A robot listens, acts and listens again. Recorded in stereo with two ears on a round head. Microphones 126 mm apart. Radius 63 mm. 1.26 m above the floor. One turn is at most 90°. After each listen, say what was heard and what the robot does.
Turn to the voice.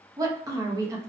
The woman speaking: about 25° right or 155° right. Turn 25° right.
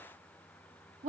So it is at 130° right. Turn 90° right.
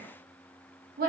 The woman speaking is now 65° right. Turn 65° right.
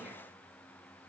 Keep listening.
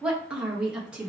Found it: a woman speaking, straight ahead, 1 to 2 m away.